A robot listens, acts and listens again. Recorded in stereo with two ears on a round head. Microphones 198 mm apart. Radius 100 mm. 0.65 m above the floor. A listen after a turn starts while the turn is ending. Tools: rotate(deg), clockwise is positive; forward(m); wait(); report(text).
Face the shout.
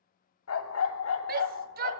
rotate(40)
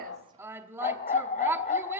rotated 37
rotate(10)
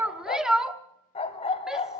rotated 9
report("Facing the shout.")